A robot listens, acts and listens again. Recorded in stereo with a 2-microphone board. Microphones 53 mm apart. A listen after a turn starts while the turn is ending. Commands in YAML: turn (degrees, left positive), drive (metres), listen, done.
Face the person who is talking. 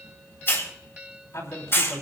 turn: 65
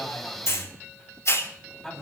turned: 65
done: "Facing the man speaking, 2 to 4 m away."